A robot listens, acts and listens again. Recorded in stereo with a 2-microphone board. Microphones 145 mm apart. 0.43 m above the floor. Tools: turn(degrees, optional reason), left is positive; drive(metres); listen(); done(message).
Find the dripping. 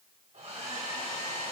listen()
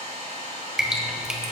turn(degrees=-30)
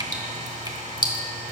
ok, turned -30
turn(degrees=-145, reason="So it is at 145° right.")
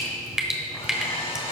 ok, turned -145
done("Facing the dripping.")